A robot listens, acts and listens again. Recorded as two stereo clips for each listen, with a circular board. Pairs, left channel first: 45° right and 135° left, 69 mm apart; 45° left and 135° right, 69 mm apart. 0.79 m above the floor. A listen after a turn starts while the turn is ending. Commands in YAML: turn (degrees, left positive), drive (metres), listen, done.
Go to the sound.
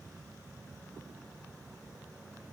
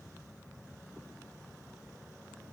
listen: true
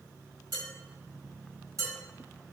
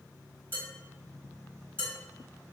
turn: 170
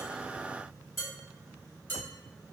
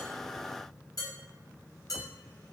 turn: 15
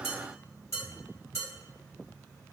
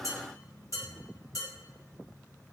drive: 1.0
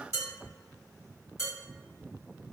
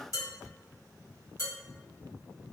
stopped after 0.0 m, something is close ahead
done: "Something is in my way. I am facing the dishes clattering but have not reached it."